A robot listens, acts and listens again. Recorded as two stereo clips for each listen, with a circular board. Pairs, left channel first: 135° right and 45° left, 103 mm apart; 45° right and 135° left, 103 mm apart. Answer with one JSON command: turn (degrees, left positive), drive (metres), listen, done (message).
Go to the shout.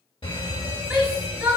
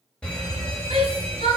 {"turn": 130}
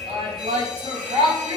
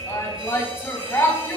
{"turn": 25}
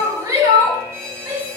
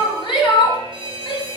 {"drive": 1.0}
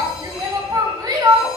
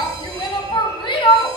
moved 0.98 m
{"drive": 1.0}
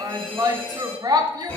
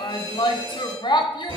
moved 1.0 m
{"drive": 1.0}
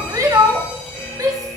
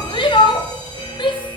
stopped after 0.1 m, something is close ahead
{"turn": -10}
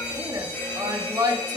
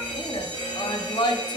{"done": "I am next to the shout."}